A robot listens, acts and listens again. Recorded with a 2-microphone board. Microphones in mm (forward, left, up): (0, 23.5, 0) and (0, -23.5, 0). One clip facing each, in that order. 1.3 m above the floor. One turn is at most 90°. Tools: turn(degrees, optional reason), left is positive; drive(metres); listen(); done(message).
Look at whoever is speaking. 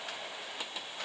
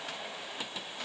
listen()
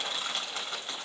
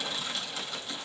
listen()
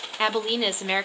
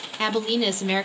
turn(degrees=15, reason="The woman speaking: about 15° left or 165° left.")
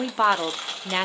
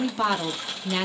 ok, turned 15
turn(degrees=90, reason="So it is at 150° left.")
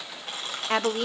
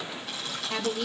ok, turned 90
turn(degrees=90, reason="The woman speaking is now 95° left.")
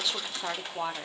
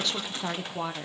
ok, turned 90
done("Facing the woman speaking, under 1 m away.")